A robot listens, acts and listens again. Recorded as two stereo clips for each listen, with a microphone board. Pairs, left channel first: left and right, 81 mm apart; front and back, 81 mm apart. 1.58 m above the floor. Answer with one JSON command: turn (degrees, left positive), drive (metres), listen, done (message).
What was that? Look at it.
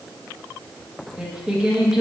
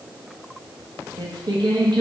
{"turn": -170}
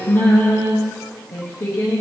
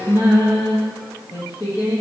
{"turn": 40}
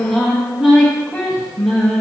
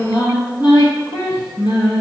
{"done": "Facing the singing."}